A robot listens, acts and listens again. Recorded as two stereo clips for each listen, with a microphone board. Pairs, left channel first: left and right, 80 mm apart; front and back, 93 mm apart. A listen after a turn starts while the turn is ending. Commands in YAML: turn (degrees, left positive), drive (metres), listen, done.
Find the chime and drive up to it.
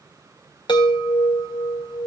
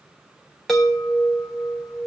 turn: 85
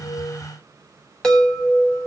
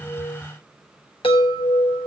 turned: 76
turn: 10
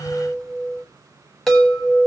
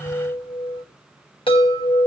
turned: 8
drive: 1.0
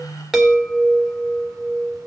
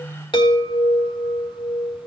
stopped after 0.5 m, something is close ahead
done: "Something is in my way. I am facing the chime but have not reached it."